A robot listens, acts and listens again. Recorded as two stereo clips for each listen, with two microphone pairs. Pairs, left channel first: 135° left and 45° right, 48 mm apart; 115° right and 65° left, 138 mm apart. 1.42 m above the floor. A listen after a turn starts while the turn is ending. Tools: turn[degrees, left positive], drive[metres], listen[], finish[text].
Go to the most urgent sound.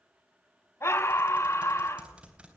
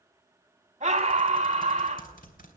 Thought: The scream: 110° left.
Action: turn[110]
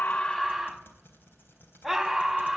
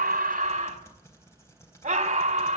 Thought: The scream is now 45° left.
Action: turn[45]
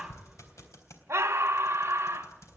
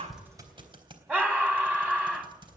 Thought: The scream is now 10° right.
Action: turn[-10]
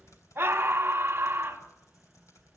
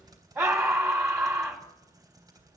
Action: drive[1.0]
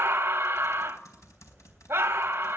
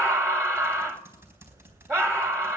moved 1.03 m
Action: drive[1.0]
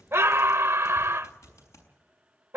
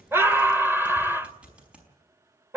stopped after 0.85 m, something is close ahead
Action: finish[I am next to the scream.]